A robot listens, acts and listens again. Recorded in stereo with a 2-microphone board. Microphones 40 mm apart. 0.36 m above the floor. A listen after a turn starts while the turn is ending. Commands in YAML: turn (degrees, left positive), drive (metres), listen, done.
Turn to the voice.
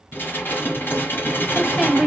turn: 30
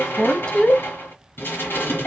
turn: 150
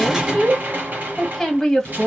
turn: 15
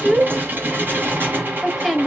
done: "Found it: a woman speaking, straight ahead, 1 to 2 m away."